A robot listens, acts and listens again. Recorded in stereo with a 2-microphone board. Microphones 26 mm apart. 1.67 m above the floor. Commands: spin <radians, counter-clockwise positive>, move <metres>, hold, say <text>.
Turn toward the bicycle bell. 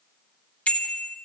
spin 1.22
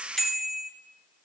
spin 0.17
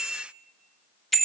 say Found it: a bicycle bell, straight ahead, 2 to 4 m away.